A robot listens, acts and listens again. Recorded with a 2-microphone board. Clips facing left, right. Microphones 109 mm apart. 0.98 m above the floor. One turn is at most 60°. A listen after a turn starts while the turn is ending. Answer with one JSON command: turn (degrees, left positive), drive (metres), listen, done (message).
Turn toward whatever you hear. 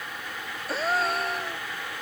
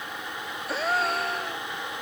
{"turn": 30}
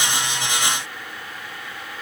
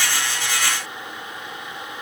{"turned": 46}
{"listen": true}
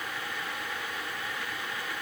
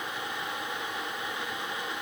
{"done": "I heard a gasp, but can't make it out now. It was about 45° right or 130° left."}